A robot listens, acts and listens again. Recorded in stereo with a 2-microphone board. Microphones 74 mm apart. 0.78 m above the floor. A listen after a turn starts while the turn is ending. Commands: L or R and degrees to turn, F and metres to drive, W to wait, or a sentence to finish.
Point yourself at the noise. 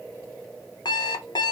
L90
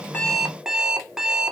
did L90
R10
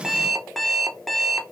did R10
Facing the alarm clock.